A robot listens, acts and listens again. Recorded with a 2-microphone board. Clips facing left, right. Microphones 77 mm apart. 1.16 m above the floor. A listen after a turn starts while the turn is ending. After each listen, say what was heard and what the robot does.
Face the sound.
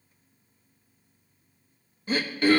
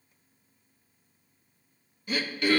The throat clearing: about 35° left or 145° left. Turn 35° left.
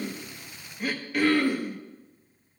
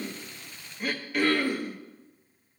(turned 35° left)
Found it: throat clearing, straight ahead.